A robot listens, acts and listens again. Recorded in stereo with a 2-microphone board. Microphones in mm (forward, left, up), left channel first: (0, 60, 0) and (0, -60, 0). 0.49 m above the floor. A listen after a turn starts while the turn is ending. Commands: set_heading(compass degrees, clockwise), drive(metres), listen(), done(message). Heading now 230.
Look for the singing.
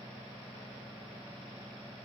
listen()
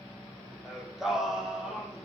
set_heading(260)
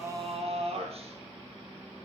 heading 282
set_heading(42)
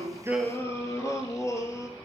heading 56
set_heading(31)
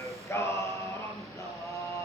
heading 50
set_heading(30)
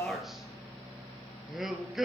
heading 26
done("Facing the singing, 2 to 4 m away.")